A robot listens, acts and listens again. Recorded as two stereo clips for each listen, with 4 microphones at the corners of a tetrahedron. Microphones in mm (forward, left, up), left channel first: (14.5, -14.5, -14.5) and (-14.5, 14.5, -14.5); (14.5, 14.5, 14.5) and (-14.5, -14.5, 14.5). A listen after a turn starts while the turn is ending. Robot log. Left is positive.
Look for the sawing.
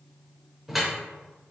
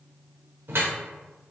cmd idle
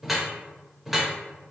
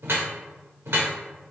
cmd idle
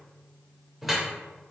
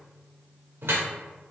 end: I can't make out sawing to turn to.